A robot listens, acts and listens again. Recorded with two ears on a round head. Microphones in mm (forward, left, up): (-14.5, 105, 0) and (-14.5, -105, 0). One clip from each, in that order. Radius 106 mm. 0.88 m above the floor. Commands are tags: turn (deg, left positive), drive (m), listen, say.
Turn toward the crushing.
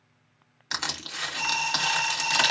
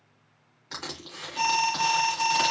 <turn deg="55"/>
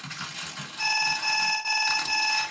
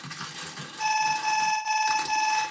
<say>Facing the crushing, 1 to 2 m away.</say>